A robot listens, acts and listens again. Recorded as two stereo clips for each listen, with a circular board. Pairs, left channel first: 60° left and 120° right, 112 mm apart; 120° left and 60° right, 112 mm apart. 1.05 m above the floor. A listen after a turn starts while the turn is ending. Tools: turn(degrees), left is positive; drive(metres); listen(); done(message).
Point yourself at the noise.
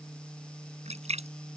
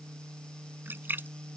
turn(degrees=-130)
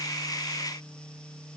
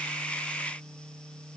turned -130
done("Facing where the splash came from. I can't hear it now.")